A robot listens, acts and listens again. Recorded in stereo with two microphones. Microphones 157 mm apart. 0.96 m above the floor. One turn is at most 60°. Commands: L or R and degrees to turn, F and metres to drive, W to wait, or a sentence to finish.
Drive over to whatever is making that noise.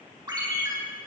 R30
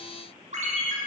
R60
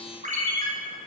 R60
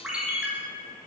F1.0
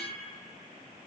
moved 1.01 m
W
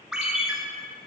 F1.0
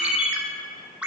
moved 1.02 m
R10
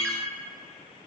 F1.0
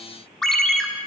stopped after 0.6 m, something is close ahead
I am next to the ringtone.